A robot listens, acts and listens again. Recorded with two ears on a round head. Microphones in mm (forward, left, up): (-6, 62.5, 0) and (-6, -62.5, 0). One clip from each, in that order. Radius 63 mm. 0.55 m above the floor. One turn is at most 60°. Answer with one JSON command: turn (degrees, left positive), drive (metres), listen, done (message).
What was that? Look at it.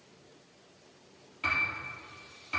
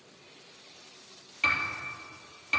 {"turn": -60}
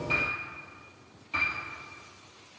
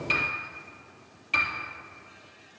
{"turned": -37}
{"turn": -55}
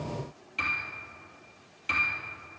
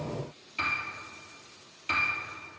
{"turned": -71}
{"turn": 15}
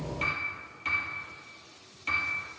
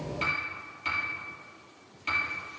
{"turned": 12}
{"done": "Found it: a piano, straight ahead."}